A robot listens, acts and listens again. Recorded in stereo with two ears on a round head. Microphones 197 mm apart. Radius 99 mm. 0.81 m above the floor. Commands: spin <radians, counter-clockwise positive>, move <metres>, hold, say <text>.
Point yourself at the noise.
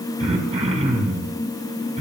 spin -0.52
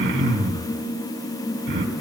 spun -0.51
spin -2.18
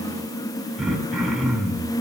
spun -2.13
say Facing the throat clearing.